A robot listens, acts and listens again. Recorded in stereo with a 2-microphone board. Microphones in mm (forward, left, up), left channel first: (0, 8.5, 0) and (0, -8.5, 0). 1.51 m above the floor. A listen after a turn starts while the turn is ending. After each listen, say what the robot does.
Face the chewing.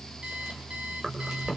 Turn 35° right.
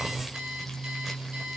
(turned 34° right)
Keep listening.
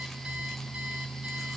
Keep listening.
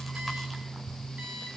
I heard chewing, but can't make it out now. It was about straight ahead or 110° right.